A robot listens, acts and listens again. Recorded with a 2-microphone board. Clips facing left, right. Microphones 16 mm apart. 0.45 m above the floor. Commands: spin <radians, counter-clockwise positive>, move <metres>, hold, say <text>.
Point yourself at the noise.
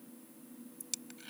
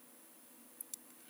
spin 1.13
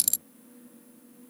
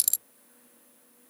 say Facing the dropped coin.